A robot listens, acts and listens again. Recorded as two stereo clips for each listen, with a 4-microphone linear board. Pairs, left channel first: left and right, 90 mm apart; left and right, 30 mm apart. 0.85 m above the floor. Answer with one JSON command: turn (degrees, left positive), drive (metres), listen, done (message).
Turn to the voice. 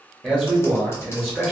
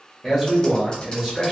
{"turn": -30}
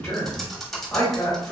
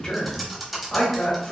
{"turn": 15}
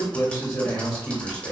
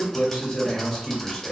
{"done": "Found it: a man speaking, straight ahead."}